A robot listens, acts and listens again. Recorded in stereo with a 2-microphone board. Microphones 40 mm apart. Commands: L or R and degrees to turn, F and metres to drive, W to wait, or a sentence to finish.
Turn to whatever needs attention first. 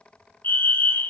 L55
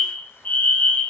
L50
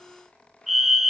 Found it: a fire alarm, straight ahead, 1 to 2 m away.